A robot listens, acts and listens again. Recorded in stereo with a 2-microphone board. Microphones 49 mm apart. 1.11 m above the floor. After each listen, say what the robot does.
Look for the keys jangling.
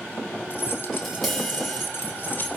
Turn 40° left.
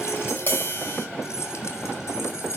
Turn 105° left.
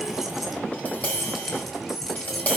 Found it: keys jangling, straight ahead, over 4 m away.